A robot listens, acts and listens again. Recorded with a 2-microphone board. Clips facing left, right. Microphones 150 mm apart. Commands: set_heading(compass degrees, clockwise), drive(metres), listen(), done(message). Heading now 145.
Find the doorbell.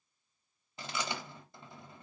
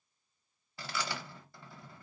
listen()
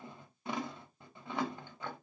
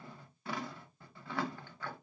listen()
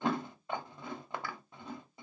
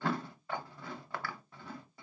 done("I can't make out a doorbell to turn to.")